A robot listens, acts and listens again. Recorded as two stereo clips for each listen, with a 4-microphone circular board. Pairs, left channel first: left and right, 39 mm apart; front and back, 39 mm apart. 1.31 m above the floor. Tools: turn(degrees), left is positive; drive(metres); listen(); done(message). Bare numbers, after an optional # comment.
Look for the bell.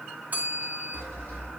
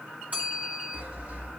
# The bell: 135° right.
turn(-135)
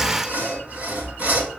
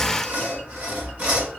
listen()
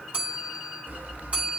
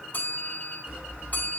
# The bell is now 40° right.
turn(-40)
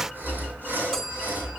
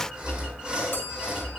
listen()
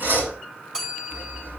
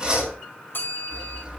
# The bell is now 20° right.
turn(-20)
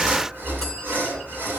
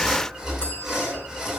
listen()
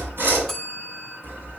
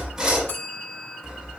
done("Facing the bell.")